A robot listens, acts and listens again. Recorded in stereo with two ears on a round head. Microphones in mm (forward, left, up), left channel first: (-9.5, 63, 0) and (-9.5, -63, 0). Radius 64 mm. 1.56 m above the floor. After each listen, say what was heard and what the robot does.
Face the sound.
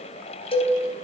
The cowbell: about 40° left or 140° left. Turn 40° left.
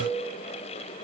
Keep listening.
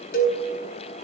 So it is at 95° left. Turn 95° left.
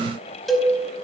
Facing the cowbell.